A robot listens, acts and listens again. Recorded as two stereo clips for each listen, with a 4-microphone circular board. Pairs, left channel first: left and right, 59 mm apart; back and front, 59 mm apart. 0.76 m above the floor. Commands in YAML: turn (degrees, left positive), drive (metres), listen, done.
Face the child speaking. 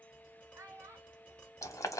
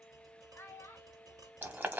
turn: -130
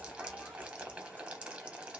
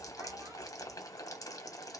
listen: true
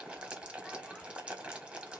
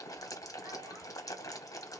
listen: true
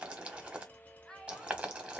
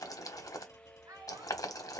turn: 10
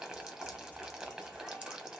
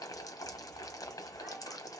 listen: true
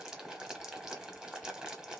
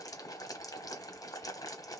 listen: true
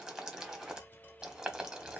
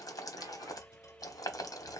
done: "Facing where the child speaking came from. I can't hear it now."